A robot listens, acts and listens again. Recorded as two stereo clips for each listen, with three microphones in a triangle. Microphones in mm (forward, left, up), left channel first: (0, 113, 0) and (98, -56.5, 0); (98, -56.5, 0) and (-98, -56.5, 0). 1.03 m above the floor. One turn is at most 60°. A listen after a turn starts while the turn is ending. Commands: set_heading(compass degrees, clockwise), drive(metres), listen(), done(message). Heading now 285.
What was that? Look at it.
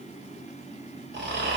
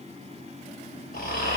set_heading(330)
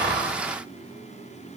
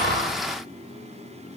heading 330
listen()
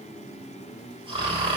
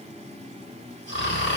done("Facing the snoring.")